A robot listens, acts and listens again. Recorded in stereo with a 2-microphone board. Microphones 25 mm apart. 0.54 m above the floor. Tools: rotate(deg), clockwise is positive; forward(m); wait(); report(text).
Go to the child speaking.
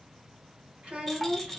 rotate(70)
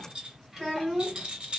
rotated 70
forward(1.0)
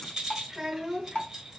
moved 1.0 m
rotate(15)
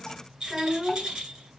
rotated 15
forward(1.0)
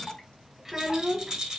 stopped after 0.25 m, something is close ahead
report("Arrived at the child speaking, straight ahead.")